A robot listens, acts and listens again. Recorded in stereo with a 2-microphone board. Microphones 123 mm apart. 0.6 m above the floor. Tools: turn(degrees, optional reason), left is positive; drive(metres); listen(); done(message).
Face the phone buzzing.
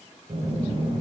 turn(degrees=-70, reason="The phone buzzing: about 70° right or 110° right.")
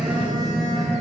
turn(degrees=-40, reason="So it is at 40° right.")
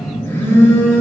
turn(degrees=20, reason="The phone buzzing is now 20° left.")
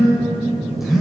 done("Facing the phone buzzing.")